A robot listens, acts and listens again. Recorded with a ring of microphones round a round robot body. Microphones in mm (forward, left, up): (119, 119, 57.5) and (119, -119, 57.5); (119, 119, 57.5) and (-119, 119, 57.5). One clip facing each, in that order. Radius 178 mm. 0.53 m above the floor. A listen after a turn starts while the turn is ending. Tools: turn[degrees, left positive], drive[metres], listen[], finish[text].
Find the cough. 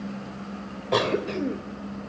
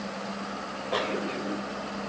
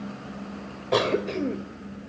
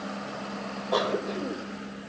Thought: The cough: 55° left.
Action: turn[55]
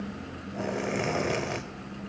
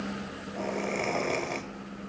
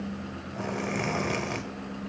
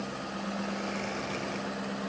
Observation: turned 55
Thought: The cough is now 10° left.
Action: turn[10]
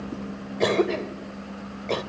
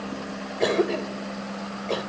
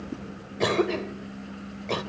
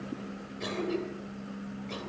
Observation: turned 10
Action: finish[Facing the cough, 2 to 4 m away.]